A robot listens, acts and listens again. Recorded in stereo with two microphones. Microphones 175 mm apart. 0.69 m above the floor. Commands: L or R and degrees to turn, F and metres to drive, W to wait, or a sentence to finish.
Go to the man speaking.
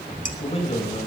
L35
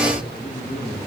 L110
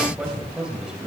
F1.0
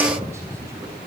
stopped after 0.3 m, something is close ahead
W
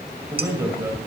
R15
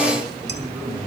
Blocked. The man speaking is further on, straight ahead.